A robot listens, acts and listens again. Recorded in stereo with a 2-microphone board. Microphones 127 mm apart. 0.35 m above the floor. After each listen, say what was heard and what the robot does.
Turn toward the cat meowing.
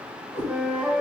Turn 90° left.
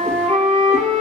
Keep listening.
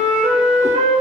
Keep listening.
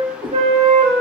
The cat meowing is now 30° right. Turn 30° right.
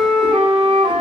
Keep listening.
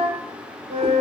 Keep listening.
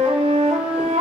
I heard a cat meowing from this way, but can't make it out now.